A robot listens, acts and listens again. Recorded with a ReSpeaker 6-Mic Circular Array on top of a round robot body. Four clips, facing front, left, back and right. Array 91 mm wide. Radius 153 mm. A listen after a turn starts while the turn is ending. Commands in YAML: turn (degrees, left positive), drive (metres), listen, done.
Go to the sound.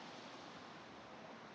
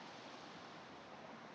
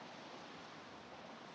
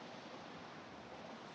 listen: true
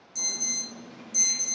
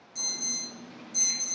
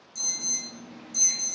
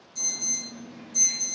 turn: 40
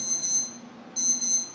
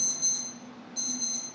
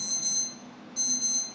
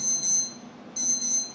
turn: -10
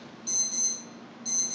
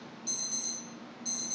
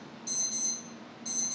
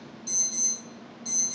drive: 1.0
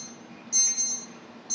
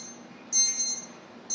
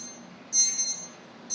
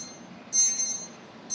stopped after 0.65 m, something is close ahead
turn: 10
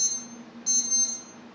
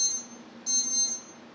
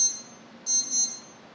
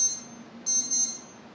done: "Blocked. The alarm is further on, straight ahead."